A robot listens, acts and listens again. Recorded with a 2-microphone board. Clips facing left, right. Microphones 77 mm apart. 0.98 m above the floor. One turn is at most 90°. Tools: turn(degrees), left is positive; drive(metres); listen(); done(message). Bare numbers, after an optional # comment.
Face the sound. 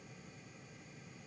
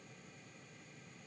listen()
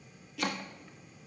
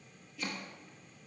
# The chopping: about 75° left or 105° left.
turn(75)
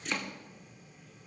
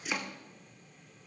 done("Facing the chopping.")